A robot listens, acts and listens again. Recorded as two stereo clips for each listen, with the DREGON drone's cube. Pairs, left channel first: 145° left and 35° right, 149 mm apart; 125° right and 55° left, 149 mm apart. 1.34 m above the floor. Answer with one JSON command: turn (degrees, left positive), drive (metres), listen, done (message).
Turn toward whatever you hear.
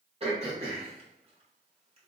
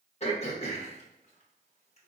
{"turn": -80}
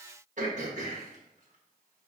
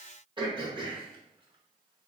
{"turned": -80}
{"done": "Found it: throat clearing, straight ahead."}